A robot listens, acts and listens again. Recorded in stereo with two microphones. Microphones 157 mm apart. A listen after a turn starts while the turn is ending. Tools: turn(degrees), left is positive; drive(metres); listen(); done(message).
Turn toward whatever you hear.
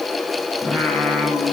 turn(degrees=30)
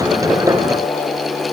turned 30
turn(degrees=140)
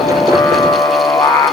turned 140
turn(degrees=15)
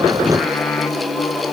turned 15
done("Facing the singing.")